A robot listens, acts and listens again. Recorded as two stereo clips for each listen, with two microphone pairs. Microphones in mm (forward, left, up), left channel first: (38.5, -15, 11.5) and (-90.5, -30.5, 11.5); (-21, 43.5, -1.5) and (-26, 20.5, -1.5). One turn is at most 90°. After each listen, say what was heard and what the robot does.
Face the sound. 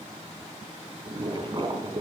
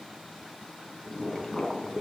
The boiling: 140° left. Turn 90° left.
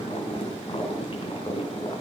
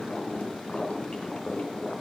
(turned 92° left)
The boiling is now 45° left. Turn 45° left.
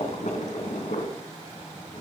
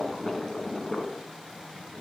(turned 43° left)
Found it: boiling, straight ahead.